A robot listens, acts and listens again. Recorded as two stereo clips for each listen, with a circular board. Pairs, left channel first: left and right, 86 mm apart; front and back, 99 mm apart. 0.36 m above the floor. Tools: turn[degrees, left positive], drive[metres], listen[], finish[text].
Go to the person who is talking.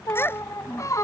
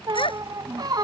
Thought: The child speaking: 25° left.
Action: turn[25]
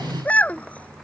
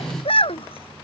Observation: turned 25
Thought: The child speaking is now 15° left.
Action: turn[15]
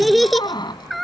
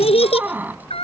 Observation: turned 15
Action: drive[1.0]
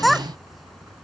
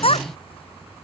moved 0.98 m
Action: drive[1.0]
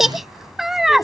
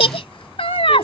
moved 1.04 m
Action: drive[1.0]
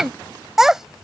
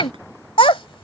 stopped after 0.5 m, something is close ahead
Action: finish[I am next to the child speaking.]